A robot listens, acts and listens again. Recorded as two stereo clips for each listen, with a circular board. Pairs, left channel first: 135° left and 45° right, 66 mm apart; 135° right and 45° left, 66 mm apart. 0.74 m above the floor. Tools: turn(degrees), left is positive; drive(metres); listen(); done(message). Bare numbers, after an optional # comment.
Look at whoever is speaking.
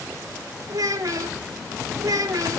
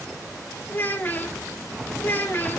# The child speaking: 75° right.
turn(-75)
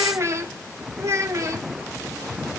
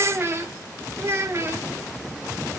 done("Found it: a child speaking, straight ahead, 1 to 2 m away.")